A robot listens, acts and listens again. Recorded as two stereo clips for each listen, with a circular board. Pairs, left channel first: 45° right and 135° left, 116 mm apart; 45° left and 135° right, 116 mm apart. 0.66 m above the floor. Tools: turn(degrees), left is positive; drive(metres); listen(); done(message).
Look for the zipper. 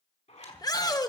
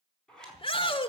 turn(degrees=-40)
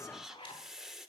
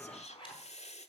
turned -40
done("Found it: a zipper, straight ahead.")